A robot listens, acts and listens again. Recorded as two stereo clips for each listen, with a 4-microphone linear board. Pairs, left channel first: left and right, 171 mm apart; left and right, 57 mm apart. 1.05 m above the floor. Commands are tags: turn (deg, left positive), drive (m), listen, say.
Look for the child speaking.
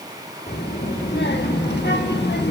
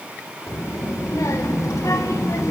<turn deg="75"/>
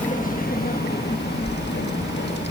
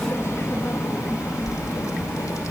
<turn deg="80"/>
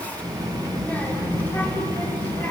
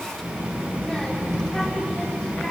<turn deg="10"/>
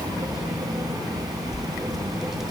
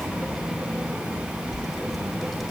<say>Facing the child speaking, 2 to 4 m away.</say>